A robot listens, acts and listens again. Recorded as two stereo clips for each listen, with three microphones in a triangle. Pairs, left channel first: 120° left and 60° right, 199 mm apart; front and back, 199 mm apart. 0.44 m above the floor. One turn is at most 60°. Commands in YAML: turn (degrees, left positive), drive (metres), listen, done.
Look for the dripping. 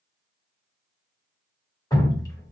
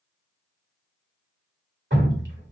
turn: -60
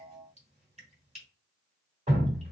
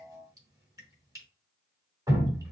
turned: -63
turn: -60
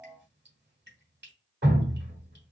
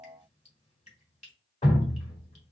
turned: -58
turn: -50
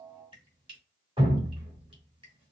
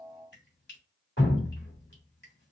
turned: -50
done: "Found it: dripping, straight ahead, 1 to 2 m away."